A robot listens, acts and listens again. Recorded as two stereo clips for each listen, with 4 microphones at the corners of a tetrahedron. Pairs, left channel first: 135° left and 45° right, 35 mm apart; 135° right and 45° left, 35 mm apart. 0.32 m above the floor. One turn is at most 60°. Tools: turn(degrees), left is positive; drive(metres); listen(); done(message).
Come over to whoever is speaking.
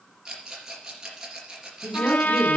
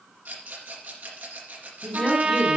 turn(degrees=60)
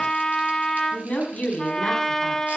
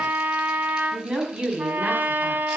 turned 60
turn(degrees=60)
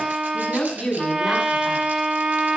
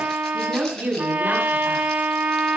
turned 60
turn(degrees=60)
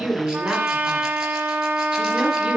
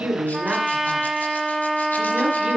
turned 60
drive(metres=1.0)
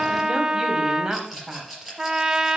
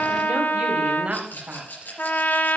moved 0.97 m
turn(degrees=15)
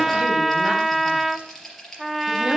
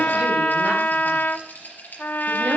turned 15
listen()
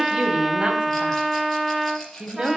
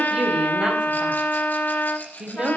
drive(metres=1.0)
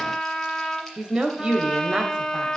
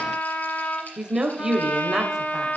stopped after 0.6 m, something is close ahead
done("I am next to the woman speaking.")